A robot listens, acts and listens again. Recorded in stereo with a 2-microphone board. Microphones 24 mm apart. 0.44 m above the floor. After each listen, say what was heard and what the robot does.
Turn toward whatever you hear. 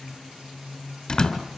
The door slam: about 30° left or 150° left. Turn 30° left.
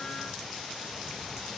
Keep listening.
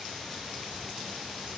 I heard a door slam, but can't make it out now. It was about straight ahead or 120° left.